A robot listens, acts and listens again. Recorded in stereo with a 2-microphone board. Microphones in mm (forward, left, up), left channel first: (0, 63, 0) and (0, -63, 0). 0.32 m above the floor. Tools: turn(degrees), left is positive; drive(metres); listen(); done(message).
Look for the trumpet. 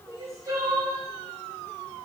listen()
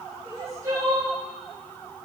listen()
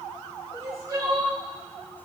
done("I can't make out a trumpet to turn to.")